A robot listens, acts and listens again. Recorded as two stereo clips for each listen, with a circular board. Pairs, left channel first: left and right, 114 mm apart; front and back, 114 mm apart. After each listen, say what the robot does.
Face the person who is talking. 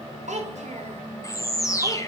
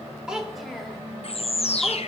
Turn 95° right.
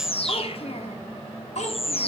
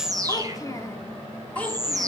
Turn 80° left.
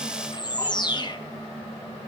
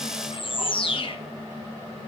Keep listening.
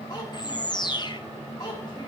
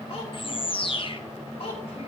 Turn 30° left.
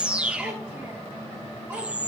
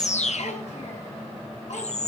Keep listening.
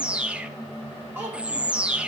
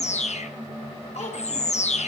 Turn 20° right.
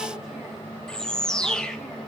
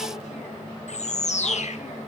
Keep listening.
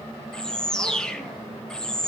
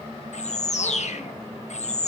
Keep listening.
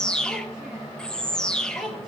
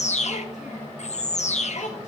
Facing the child speaking.